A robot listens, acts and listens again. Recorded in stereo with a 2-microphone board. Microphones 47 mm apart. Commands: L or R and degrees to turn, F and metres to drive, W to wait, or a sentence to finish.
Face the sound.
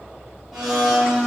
R30
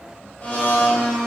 L20
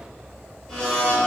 Facing the blender, under 1 m away.